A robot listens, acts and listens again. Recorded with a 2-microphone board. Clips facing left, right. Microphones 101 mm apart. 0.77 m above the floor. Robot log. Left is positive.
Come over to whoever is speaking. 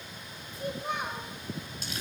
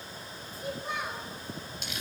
note: The child speaking: about 55° left or 125° left.
cmd yaw +55
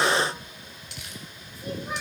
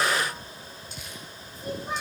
cmd idle
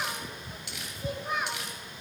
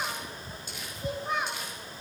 cmd fwd 1.0
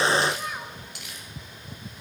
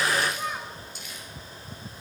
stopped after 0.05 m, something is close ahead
end: Blocked. The child speaking is further on, straight ahead.